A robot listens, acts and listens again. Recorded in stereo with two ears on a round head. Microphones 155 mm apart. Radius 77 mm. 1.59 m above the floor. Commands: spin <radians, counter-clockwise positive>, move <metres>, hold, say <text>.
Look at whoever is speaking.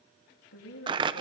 spin 1.31
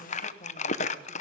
hold
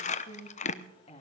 spin 0.52
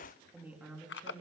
spin -0.17
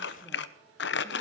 hold
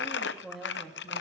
say Facing the woman speaking.